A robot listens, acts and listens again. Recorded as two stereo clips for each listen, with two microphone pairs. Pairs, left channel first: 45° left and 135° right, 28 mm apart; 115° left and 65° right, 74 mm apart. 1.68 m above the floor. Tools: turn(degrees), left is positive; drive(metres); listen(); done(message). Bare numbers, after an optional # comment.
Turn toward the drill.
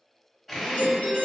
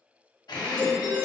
# The drill: 130° left.
turn(130)
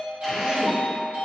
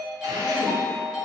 listen()
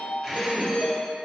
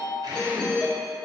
# The drill is now 35° right.
turn(-35)
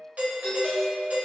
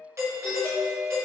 listen()
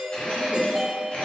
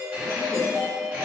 done("Facing the drill.")